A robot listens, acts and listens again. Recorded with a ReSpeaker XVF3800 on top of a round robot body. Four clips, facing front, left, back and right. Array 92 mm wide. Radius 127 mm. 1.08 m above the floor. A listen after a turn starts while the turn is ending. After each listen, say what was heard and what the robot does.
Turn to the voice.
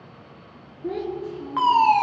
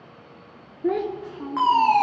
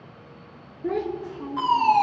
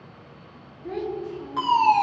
The child speaking: 110° left. Turn 110° left.
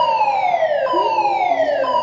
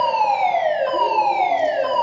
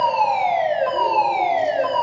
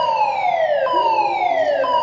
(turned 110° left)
Keep listening.
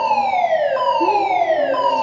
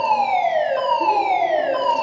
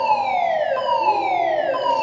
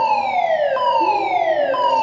Keep listening.
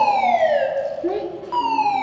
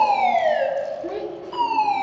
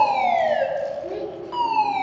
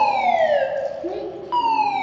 Facing the child speaking, 2 to 4 m away.